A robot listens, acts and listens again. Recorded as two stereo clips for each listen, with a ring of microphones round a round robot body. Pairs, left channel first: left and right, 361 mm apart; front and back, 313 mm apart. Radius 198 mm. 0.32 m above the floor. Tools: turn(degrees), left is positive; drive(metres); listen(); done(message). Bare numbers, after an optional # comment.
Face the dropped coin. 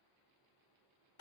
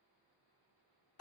listen()
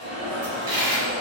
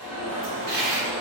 # The dropped coin: 55° right.
turn(-55)
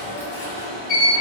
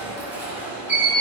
done("Facing where the dropped coin came from. I can't hear it now.")